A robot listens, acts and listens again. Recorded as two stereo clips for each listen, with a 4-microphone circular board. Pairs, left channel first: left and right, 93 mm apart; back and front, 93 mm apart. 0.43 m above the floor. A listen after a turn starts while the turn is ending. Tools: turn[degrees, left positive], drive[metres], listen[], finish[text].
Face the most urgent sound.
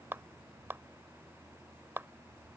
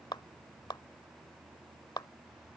Action: listen[]
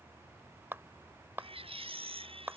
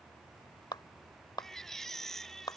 Thought: The baby crying: 95° right.
Action: turn[-95]
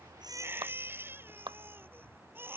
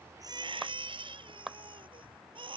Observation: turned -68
Thought: The baby crying is now 25° right.
Action: turn[-25]
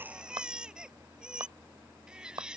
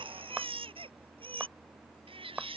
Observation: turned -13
Thought: The baby crying is now 10° right.
Action: turn[-10]
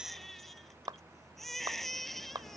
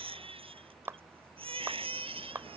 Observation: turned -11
Action: finish[Facing the baby crying.]